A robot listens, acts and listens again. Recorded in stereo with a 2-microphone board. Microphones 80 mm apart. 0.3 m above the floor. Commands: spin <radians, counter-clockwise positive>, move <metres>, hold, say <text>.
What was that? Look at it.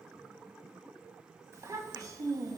spin -0.96
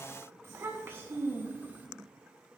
spin -0.44
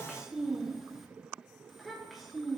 say Found it: a child speaking, straight ahead, 2 to 4 m away.